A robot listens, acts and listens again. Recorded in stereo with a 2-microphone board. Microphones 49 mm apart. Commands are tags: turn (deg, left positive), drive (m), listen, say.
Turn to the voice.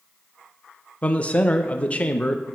<turn deg="30"/>
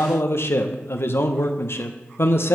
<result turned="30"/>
<turn deg="120"/>
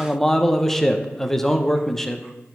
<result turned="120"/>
<turn deg="10"/>
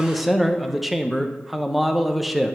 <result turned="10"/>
<say>Found it: a man speaking, straight ahead.</say>